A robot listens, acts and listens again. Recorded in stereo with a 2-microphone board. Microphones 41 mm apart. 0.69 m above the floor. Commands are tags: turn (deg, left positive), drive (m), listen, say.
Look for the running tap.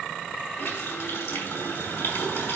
<turn deg="90"/>
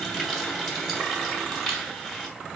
<say>Found it: a running tap, straight ahead, 2 to 4 m away.</say>